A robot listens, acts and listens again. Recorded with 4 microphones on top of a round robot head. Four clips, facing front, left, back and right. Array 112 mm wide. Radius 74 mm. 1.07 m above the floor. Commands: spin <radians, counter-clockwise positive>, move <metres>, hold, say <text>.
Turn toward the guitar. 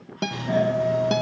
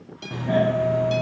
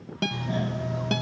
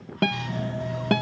spin -1.22
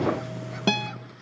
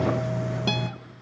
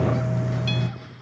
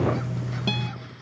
hold
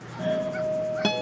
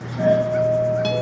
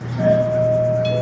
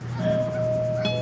hold
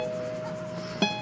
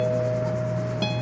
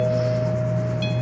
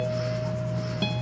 say Facing where the guitar came from. I can't hear it now.